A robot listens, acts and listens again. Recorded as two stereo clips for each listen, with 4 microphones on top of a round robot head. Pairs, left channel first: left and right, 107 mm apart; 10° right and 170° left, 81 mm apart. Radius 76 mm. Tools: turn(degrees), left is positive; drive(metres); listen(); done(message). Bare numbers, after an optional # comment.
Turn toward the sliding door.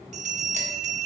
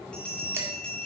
listen()
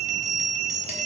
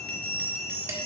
listen()
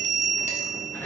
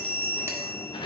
# The sliding door: 15° left.
turn(15)
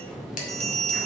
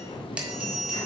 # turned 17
done("Found it: a sliding door, straight ahead.")